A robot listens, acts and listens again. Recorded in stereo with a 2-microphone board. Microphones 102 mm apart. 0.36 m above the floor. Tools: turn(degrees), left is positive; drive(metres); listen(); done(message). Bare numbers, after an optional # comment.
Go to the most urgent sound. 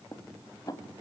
listen()
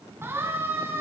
# The siren: about 20° right or 160° right.
turn(-20)
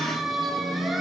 drive(1.0)
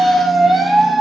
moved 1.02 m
drive(1.0)
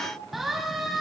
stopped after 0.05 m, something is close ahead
done("Something is in my way. I am facing the siren but have not reached it.")